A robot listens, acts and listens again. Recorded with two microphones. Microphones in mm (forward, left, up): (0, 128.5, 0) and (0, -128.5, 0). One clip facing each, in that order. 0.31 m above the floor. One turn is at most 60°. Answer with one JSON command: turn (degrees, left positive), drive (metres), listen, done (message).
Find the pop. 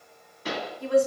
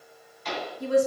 {"turn": 60}
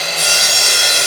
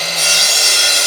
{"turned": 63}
{"turn": 25}
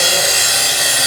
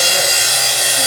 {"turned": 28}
{"done": "Facing where the pop came from. I can't hear it now."}